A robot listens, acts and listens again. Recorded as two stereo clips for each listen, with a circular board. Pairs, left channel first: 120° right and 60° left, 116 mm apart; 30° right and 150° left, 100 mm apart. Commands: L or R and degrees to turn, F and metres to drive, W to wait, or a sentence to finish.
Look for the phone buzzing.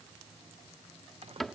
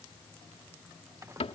W
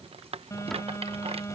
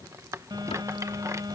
L180
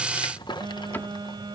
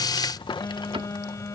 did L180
L20
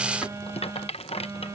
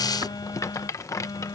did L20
Facing the phone buzzing.